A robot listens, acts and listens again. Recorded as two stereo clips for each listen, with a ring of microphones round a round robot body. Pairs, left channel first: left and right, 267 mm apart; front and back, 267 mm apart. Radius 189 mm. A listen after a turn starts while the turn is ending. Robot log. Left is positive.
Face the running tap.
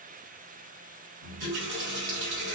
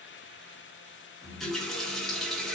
note: The running tap: 90° right.
cmd yaw -90
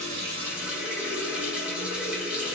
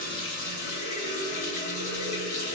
end: Found it: a running tap, straight ahead, 1 to 2 m away.